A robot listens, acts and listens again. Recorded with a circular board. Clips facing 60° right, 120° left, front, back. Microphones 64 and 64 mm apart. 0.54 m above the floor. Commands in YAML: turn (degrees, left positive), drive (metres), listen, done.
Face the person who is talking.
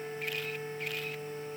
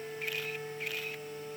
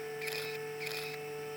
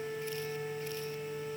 listen: true
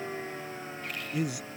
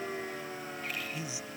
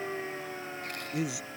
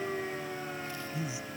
turn: -25
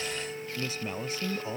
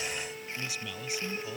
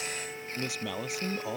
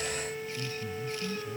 done: "Found it: a man speaking, straight ahead."